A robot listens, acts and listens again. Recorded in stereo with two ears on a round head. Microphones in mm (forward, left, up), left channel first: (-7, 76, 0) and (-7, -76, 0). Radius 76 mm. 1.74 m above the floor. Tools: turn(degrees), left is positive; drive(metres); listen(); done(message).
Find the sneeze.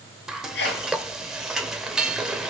turn(degrees=90)
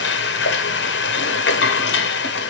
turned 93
done("Facing where the sneeze came from. I can't hear it now.")